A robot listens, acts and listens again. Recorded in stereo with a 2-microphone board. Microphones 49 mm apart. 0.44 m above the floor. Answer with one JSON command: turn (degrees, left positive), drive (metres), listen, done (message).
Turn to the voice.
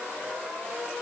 {"listen": true}
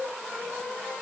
{"listen": true}
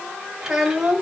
{"turn": -30}
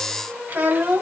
{"turn": -140}
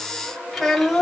{"done": "Found it: a child speaking, straight ahead, 1 to 2 m away."}